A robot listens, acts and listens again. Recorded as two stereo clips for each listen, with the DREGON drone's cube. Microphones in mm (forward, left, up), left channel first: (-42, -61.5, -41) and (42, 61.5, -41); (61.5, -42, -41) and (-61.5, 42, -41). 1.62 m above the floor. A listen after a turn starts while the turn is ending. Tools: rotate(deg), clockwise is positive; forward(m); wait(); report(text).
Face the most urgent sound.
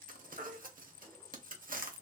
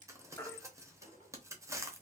rotate(-35)
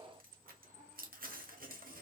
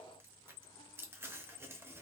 wait()
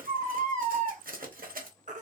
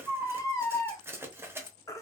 rotate(-35)
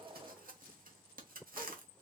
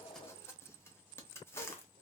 wait()
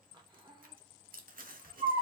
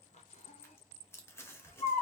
report("Facing the baby crying.")